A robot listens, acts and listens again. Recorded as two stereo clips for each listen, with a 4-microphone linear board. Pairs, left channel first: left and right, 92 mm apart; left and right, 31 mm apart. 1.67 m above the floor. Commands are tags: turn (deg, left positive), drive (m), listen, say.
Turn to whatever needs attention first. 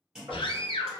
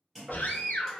<turn deg="90"/>
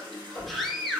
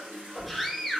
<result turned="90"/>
<say>Facing the scream.</say>